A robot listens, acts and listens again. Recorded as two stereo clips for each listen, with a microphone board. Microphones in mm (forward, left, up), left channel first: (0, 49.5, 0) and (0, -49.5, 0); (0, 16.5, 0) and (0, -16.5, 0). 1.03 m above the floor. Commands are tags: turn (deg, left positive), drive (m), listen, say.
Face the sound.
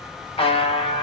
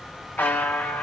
<turn deg="75"/>
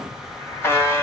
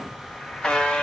<turn deg="25"/>
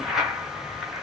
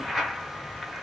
<say>Facing the buzzer, 1 to 2 m away.</say>